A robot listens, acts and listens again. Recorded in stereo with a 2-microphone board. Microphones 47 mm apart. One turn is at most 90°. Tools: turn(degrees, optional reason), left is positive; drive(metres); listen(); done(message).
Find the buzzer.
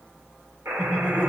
turn(degrees=-75, reason="The buzzer: about 75° right or 105° right.")
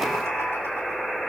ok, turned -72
done("Facing the buzzer.")